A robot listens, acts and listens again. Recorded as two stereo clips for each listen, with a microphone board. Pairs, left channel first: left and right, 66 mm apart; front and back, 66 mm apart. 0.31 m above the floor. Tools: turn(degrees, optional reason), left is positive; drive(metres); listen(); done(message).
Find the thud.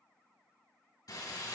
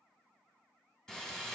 listen()
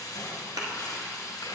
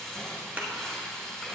turn(degrees=-110, reason="The thud: 110° right.")
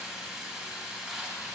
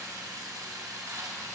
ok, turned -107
done("I heard a thud from this way, but can't make it out now.")